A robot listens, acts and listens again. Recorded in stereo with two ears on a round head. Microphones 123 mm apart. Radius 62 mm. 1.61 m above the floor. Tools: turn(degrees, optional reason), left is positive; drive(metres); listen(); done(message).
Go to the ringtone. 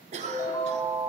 turn(degrees=25, reason="The ringtone: about 25° left or 155° left.")
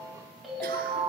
drive(metres=1.0)
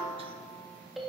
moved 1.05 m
drive(metres=1.0)
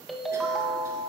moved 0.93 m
drive(metres=1.0)
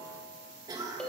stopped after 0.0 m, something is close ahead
done("I am next to the ringtone.")